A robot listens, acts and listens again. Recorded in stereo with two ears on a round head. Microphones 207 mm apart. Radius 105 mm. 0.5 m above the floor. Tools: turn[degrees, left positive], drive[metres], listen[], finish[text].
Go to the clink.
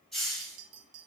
Action: turn[-90]
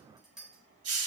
Action: drive[1.0]
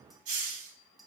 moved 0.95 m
Action: drive[1.0]
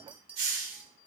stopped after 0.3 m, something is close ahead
Action: finish[I am next to the clink.]